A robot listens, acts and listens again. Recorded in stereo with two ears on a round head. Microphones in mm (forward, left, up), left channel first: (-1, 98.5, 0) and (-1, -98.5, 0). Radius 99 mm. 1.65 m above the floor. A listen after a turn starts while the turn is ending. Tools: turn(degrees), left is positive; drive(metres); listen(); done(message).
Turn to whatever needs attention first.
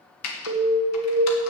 turn(degrees=-40)
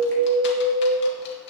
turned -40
turn(degrees=-100)
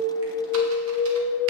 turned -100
turn(degrees=30)
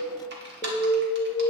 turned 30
turn(degrees=10)
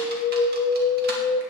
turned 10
done("Found it: an alarm, straight ahead.")